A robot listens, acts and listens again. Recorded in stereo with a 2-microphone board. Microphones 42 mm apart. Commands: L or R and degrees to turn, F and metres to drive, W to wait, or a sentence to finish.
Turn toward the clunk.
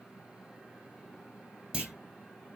R25
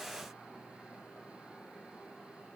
W
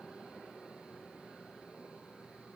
I heard a clunk, but can't make it out now. It was about straight ahead or 130° right.